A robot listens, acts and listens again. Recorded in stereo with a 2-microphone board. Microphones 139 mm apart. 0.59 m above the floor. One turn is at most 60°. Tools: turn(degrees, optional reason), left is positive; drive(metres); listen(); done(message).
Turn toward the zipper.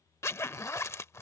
turn(degrees=20, reason="The zipper: about 20° left or 160° left.")
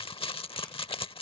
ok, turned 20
turn(degrees=60, reason="So it is at 140° left.")
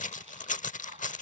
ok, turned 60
turn(degrees=60, reason="The zipper is now 65° left.")
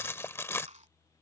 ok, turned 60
turn(degrees=20, reason="The zipper is now 20° left.")
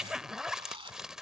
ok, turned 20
done("Found it: a zipper, straight ahead.")